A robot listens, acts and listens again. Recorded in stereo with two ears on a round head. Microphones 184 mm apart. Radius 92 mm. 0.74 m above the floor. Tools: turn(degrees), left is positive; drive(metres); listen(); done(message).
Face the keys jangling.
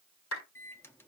listen()
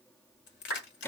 turn(degrees=60)
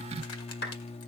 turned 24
listen()
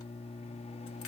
listen()
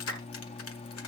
done("I heard keys jangling, but can't make it out now. It was about 35° left or 100° left.")